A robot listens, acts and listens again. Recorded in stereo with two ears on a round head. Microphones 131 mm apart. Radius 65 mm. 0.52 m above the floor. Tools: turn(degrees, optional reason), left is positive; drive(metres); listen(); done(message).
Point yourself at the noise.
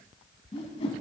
turn(degrees=40, reason="The whoosh: about 40° left or 140° left.")
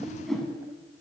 done("Facing the whoosh.")